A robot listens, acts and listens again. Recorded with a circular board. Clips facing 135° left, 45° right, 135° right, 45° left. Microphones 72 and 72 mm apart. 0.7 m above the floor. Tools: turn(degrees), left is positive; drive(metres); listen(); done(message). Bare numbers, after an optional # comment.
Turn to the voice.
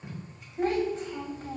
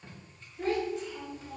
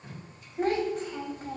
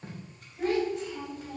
# The child speaking: straight behind.
turn(180)
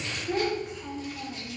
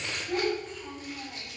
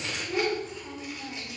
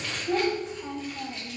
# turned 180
# The child speaking is now 60° left.
turn(60)
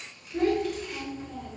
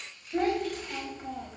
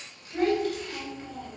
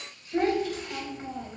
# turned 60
# The child speaking is now 15° right.
turn(-15)
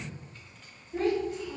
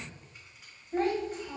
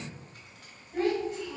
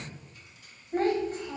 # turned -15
done("Found it: a child speaking, straight ahead.")